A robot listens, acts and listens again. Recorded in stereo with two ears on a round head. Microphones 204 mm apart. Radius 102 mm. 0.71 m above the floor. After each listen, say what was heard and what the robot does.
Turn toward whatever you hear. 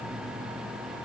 Keep listening.
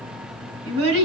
The child speaking: about 65° right or 115° right. Turn 65° right.
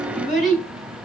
Found it: a child speaking, straight ahead.